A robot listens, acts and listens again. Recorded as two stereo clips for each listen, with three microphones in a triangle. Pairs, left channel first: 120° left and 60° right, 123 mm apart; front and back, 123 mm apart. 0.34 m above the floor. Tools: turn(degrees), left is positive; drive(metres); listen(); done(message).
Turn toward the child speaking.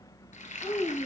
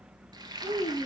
turn(degrees=15)
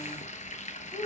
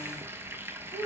done("Found it: a child speaking, straight ahead.")